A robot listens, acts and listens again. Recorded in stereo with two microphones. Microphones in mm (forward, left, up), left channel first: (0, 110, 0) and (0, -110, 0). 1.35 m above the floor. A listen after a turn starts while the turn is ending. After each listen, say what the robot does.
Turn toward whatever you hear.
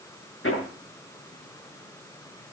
Turn 65° left.
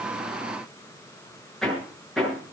Found it: hammering, straight ahead.